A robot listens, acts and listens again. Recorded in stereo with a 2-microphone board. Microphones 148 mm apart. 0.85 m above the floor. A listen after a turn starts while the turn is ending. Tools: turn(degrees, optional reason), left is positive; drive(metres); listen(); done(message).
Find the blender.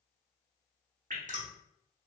listen()
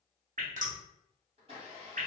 turn(degrees=-45, reason="The blender: about 45° right or 135° right.")
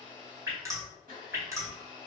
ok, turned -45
turn(degrees=-90, reason="So it is at 90° right.")
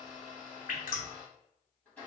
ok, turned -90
turn(degrees=15, reason="The blender is now 15° left.")
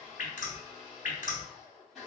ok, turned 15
done("Facing the blender, 1 to 2 m away.")